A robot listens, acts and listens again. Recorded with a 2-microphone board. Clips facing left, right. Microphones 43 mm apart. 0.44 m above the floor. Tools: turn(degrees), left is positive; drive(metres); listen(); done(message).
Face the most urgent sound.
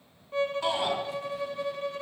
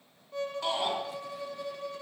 turn(degrees=30)
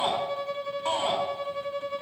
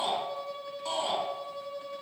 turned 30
turn(degrees=140)
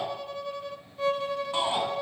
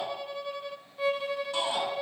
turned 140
turn(degrees=30)
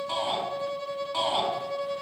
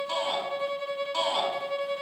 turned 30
done("Facing the shout.")